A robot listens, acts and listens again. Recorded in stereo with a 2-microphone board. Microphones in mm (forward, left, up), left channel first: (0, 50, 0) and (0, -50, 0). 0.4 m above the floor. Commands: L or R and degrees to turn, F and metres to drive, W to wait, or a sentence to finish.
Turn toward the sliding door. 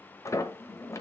L30
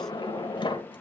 L110
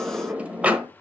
R15
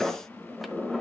Found it: a sliding door, straight ahead.